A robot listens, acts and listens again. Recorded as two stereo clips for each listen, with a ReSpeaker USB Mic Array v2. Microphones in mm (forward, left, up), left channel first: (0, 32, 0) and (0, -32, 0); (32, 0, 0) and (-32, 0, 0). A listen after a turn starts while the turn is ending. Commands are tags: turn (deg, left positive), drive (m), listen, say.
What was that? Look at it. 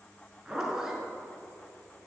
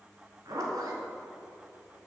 <turn deg="-170"/>
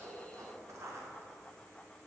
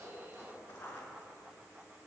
<turn deg="-55"/>
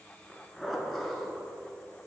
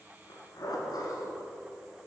<say>Found it: a zipper, straight ahead.</say>